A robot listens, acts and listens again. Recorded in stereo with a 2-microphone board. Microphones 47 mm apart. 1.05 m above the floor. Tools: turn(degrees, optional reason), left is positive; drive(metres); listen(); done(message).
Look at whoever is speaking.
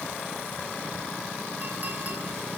listen()
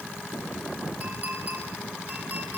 listen()
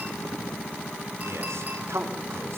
turn(degrees=-70, reason="The man speaking: about 70° right or 110° right.")
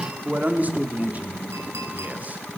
turn(degrees=-35, reason="So it is at 35° right.")
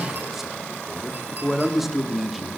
done("Facing the man speaking, 2 to 4 m away.")